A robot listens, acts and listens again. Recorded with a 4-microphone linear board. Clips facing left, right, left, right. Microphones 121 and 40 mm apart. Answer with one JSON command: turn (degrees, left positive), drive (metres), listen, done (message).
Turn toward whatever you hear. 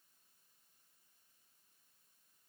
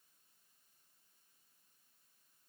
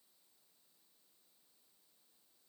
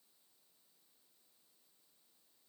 {"listen": true}
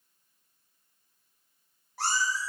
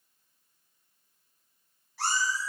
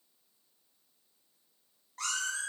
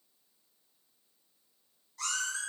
{"turn": 45}
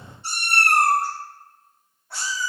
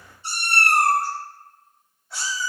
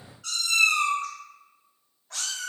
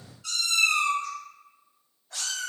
{"turn": 110}
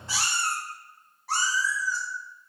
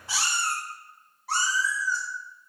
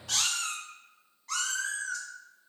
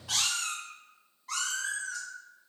{"done": "Found it: a cat meowing, straight ahead."}